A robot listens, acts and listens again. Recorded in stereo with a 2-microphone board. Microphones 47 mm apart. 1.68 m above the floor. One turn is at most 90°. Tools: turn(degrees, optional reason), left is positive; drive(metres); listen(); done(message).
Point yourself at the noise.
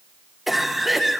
turn(degrees=30)
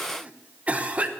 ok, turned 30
turn(degrees=-35, reason="So it is at 35° right.")
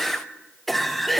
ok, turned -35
done("Facing the cough.")